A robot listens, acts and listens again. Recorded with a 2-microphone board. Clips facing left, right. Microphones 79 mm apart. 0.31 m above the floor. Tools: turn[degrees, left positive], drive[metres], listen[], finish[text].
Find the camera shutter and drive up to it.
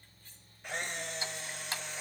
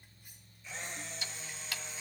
Thought: The camera shutter: about 70° left or 110° left.
Action: turn[70]
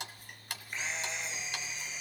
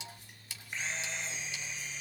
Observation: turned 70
Action: drive[1.0]
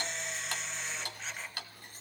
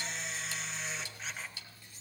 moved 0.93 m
Action: drive[1.0]
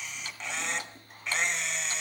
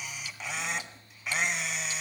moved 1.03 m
Action: drive[1.0]
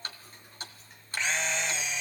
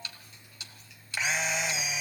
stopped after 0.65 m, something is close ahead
Thought: The camera shutter is now 10° right.
Action: turn[-10]
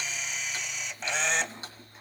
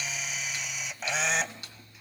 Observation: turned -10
Action: finish[I am next to the camera shutter.]